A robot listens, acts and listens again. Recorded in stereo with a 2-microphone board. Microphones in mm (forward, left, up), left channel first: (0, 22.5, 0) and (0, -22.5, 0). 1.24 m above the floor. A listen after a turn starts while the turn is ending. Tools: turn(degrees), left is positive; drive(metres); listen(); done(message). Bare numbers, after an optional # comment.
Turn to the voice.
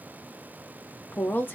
# The woman speaking: about 50° left or 130° left.
turn(50)
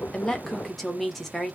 done("Found it: a woman speaking, straight ahead, 1 to 2 m away.")